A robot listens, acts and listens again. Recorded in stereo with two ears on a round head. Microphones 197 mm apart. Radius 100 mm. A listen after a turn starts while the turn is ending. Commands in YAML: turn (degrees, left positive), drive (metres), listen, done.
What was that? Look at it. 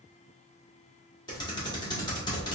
turn: 20
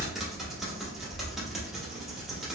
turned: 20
done: "Facing the typing on a keyboard."